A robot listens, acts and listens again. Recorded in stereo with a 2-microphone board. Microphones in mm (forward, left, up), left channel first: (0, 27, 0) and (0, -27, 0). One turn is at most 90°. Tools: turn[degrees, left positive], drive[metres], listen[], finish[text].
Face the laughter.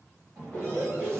Thought: The laughter: about 20° left or 160° left.
Action: turn[20]
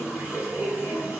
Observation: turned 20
Thought: So it is at 140° left.
Action: turn[90]
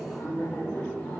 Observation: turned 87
Thought: The laughter is now 55° left.
Action: turn[55]
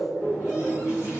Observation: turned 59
Action: finish[Found it: laughter, straight ahead, 1 to 2 m away.]